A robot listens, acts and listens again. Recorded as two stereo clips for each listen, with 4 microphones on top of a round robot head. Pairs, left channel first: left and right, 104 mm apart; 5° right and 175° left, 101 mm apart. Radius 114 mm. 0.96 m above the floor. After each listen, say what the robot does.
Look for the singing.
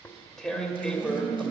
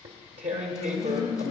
Facing the singing.